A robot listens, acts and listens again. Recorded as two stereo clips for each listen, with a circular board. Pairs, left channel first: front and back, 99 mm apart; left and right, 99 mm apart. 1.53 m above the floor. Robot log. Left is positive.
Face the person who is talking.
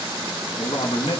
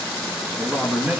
note: The man speaking: 15° right.
cmd yaw -15
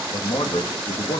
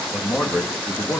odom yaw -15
end: Found it: a man speaking, straight ahead, 2 to 4 m away.